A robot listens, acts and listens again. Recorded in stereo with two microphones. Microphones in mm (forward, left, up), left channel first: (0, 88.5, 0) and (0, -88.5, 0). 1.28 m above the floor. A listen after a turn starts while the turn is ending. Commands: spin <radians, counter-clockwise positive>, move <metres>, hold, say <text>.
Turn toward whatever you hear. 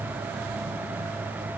hold
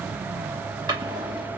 spin -0.35
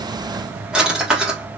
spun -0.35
say Found it: a drawer, straight ahead.